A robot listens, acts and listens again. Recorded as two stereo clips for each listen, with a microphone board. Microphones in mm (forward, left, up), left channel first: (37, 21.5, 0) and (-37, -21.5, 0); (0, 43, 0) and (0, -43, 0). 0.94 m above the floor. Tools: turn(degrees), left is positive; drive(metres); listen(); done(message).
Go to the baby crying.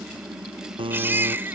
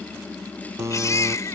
turn(degrees=145)
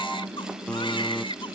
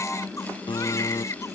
turn(degrees=40)
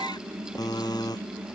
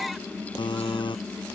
listen()
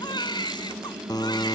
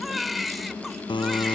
drive(metres=1.0)
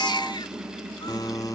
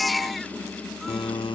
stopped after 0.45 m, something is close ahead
done("Something is in my way. I am facing the baby crying but have not reached it.")